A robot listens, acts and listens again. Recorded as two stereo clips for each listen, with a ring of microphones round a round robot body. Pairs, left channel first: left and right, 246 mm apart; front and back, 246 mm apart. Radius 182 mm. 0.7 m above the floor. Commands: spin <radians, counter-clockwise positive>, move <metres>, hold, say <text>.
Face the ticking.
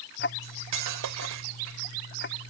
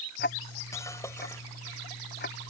spin 0.87
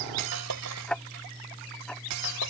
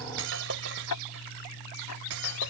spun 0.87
say Found it: ticking, straight ahead.